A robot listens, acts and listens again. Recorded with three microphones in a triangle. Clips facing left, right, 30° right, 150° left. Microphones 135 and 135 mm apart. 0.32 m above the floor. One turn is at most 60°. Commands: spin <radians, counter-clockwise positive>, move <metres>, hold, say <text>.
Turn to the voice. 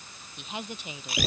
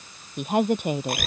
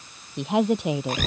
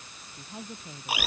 spin -0.87
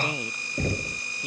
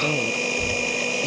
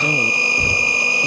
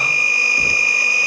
hold
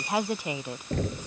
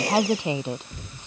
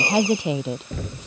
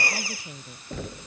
spin -0.35
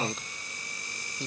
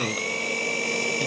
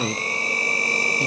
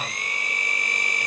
hold
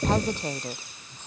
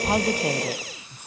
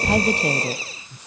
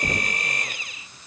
spin -0.17
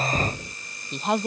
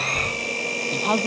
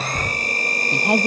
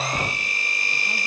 say Found it: a woman speaking, straight ahead.